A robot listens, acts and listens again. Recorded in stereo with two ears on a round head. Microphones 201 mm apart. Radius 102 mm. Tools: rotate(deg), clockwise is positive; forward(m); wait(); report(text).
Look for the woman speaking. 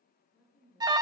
rotate(-30)
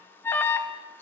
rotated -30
wait()
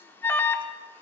wait()
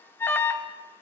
report("I heard a woman speaking, but can't make it out now. It was about 25° right or 145° left.")